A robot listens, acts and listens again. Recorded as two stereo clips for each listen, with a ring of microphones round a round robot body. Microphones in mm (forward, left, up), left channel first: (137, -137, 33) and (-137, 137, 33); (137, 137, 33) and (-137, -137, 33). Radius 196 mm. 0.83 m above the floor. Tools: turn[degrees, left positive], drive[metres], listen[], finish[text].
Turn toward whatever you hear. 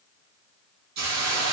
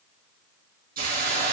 Thought: The hiss: 155° left.
Action: turn[155]
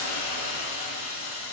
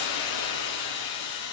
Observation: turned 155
Thought: The hiss is now 10° left.
Action: turn[10]
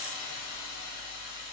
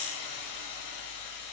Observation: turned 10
Action: finish[Found it: a hiss, straight ahead, over 4 m away.]